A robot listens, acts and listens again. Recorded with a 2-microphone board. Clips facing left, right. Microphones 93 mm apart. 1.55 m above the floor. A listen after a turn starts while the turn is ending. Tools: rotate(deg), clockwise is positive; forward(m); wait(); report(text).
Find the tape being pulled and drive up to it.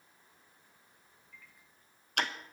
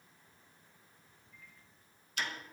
wait()
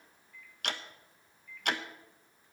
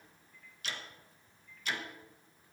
wait()
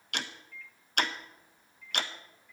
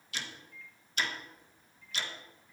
report("I can't make out tape being pulled, only ticking and a microwave.")